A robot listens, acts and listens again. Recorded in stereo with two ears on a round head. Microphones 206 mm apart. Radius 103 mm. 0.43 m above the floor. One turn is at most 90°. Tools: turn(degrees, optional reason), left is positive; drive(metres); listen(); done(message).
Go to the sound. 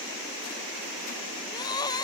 turn(degrees=20, reason="The crying: about 20° left or 160° left.")
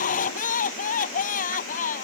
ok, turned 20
turn(degrees=90, reason="So it is at 145° left.")
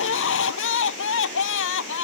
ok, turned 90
turn(degrees=55, reason="The crying is now 55° left.")
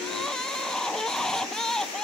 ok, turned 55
drive(metres=1.0)
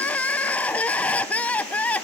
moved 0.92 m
drive(metres=1.0)
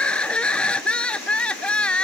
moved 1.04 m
drive(metres=1.0)
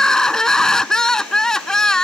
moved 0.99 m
drive(metres=1.0)
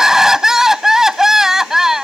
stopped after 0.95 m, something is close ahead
done("I am next to the crying.")